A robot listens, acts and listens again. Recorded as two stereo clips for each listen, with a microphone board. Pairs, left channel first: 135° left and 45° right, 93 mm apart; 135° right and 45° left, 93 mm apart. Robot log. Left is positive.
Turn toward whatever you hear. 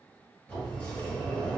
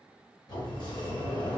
note: The sliding door: 150° right.
cmd yaw -150
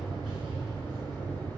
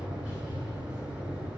note: The sliding door is now 25° right.
cmd yaw -25
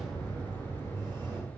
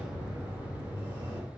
note: The sliding door is now 10° right.
cmd yaw -10
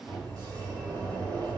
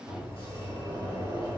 end: Facing the sliding door, 2 to 4 m away.